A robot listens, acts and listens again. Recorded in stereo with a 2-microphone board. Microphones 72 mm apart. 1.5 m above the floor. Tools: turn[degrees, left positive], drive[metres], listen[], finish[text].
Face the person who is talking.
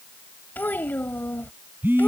Thought: The child speaking: about 25° left or 155° left.
Action: turn[25]
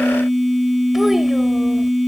Action: listen[]
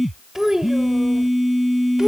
Thought: So it is at 10° right.
Action: turn[-10]
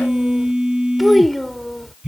Action: finish[Facing the child speaking.]